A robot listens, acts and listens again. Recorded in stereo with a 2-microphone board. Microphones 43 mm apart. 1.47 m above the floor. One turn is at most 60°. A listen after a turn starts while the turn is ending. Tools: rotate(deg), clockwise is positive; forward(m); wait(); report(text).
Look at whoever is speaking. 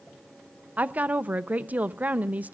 rotate(40)
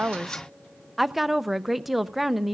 report("Found it: a woman speaking, straight ahead.")